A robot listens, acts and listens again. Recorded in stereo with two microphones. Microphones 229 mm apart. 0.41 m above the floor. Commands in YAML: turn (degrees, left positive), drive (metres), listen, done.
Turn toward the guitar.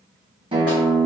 turn: -20
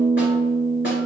turn: -135
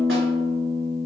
turn: 30
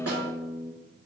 done: "Found it: a guitar, straight ahead."